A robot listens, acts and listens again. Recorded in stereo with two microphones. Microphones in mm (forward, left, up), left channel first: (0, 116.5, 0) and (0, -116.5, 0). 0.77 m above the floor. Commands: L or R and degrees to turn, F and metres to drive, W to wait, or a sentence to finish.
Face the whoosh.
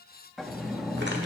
W
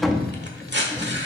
W
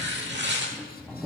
I can't make out a whoosh to turn to.